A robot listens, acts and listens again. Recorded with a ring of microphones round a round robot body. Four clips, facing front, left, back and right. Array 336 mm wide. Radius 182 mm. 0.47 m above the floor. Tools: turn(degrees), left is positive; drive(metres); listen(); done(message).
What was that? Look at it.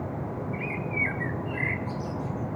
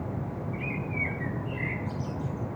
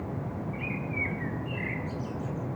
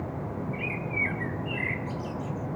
turn(degrees=-30)
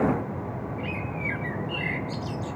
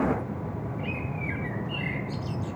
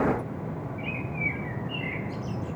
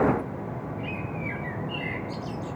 done("Found it: a bird, straight ahead.")